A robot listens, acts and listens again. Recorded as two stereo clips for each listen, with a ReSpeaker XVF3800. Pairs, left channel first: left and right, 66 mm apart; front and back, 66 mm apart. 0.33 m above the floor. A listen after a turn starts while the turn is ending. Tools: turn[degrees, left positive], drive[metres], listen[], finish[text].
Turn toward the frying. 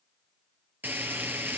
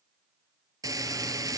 Thought: The frying: 150° right.
Action: turn[-150]
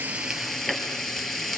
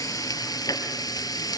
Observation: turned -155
Action: finish[Found it: frying, straight ahead.]